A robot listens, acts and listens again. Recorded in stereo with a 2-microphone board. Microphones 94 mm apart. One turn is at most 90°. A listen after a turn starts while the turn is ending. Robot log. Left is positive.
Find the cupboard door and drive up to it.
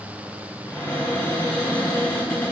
note: The cupboard door: about 25° left or 155° left.
cmd yaw +25
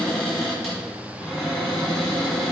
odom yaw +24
cmd fwd 1.0
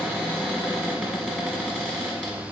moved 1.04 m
note: The cupboard door is now 10° left.
cmd yaw +10
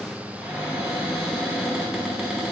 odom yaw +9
cmd fwd 1.0
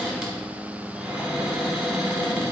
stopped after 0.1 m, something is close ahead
end: Arrived at the cupboard door, straight ahead.